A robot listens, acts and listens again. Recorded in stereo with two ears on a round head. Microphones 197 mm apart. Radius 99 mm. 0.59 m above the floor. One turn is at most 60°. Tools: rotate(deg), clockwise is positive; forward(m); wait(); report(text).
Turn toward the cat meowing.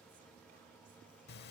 wait()
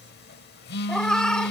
rotate(-30)
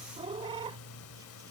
rotate(25)
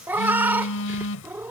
rotate(10)
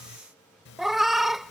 report("Facing the cat meowing.")